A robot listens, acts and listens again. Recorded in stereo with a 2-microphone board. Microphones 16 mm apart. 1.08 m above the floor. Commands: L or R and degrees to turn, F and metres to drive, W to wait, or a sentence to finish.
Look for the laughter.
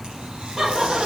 R50
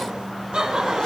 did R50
R80
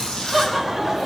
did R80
Facing the laughter.